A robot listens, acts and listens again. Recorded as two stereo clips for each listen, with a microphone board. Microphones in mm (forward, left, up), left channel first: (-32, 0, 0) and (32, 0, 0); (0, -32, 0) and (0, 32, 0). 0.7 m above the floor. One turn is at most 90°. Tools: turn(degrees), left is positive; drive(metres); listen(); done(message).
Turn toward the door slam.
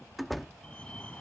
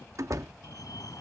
turn(degrees=90)
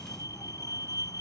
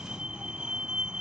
done("I heard a door slam from this way, but can't make it out now.")